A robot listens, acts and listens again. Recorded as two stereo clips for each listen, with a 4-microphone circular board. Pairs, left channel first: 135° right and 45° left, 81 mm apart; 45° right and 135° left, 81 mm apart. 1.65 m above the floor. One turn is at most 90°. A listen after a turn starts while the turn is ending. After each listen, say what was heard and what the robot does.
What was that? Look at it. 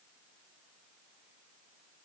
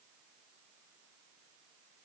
Keep listening.
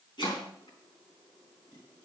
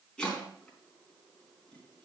The chopping: 125° right. Turn 90° right.
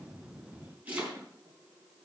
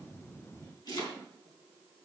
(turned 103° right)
The chopping is now 25° right. Turn 25° right.
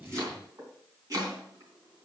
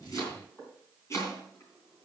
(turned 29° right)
Facing the chopping.